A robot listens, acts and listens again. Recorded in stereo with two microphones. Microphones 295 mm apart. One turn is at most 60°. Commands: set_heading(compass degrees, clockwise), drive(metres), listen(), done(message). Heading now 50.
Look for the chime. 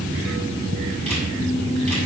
listen()
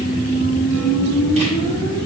listen()
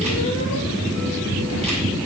done("I can't make out a chime to turn to.")